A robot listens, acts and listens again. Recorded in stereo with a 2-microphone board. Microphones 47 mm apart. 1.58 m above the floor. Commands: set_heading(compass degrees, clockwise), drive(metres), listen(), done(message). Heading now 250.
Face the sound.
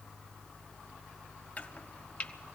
set_heading(215)
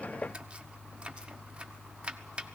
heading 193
set_heading(213)
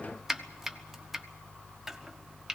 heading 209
done("Found it: chopping, straight ahead.")